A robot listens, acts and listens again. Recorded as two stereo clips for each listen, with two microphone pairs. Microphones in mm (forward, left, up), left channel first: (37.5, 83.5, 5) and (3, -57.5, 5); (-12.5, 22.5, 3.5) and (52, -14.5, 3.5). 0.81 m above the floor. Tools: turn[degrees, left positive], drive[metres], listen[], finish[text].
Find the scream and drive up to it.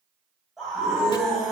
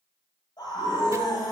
Thought: The scream: 165° left.
Action: turn[165]
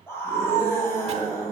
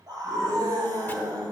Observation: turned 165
Action: drive[1.0]
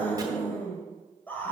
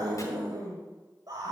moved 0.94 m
Action: drive[1.0]
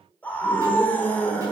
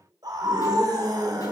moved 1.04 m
Action: drive[1.0]
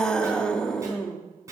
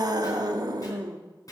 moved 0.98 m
Action: drive[1.0]
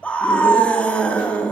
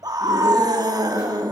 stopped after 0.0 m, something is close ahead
Action: finish[Arrived at the scream, straight ahead.]